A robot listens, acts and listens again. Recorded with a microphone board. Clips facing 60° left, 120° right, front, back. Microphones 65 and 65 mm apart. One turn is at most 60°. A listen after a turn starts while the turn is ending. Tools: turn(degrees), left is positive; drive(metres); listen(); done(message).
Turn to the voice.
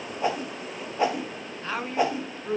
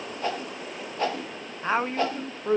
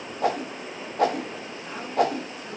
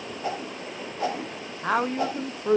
turn(degrees=60)
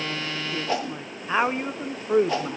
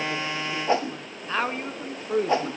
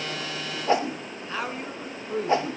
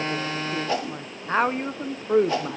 turn(degrees=60)
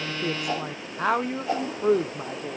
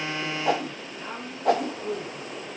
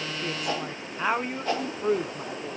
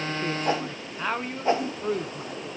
turn(degrees=60)
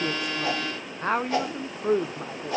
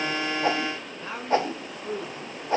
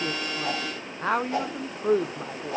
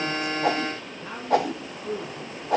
turn(degrees=20)
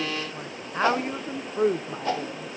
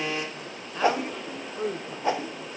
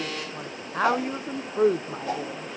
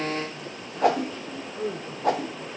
done("Facing the woman speaking, under 1 m away.")